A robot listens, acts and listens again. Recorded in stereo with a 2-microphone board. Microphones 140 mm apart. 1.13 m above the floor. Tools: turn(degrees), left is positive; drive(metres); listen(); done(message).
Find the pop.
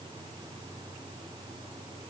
listen()
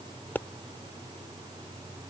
turn(degrees=30)
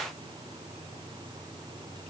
listen()
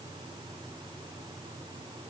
done("I heard a pop, but can't make it out now. It was about 15° right or 135° left.")